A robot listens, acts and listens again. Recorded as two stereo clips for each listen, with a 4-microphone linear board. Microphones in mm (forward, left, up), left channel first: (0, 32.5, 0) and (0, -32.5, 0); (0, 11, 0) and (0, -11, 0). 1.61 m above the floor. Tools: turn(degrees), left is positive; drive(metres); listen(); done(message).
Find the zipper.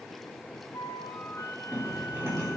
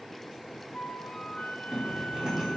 turn(degrees=-40)
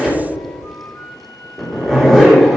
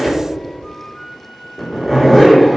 done("Found it: a zipper, straight ahead, 2 to 4 m away.")